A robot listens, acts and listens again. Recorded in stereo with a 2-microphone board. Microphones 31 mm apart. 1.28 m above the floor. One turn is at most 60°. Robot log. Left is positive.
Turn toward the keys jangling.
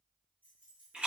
note: The keys jangling: about 70° right or 110° right.
cmd yaw -60
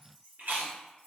note: So it is at 50° right.
cmd yaw -50
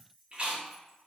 end: Found it: keys jangling, straight ahead.